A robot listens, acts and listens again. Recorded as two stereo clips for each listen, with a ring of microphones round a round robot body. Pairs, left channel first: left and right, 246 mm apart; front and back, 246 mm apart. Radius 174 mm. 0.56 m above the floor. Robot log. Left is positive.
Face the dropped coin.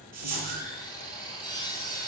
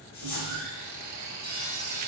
note: The dropped coin: 85° right.
cmd yaw -85
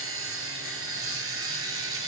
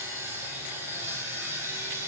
end: Facing where the dropped coin came from. I can't hear it now.